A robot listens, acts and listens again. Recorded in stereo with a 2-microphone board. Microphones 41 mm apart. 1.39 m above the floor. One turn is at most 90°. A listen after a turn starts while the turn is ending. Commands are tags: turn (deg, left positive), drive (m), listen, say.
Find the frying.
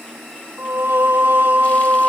<listen/>
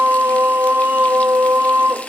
<listen/>
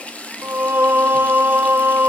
<say>I can't make out frying, only singing.</say>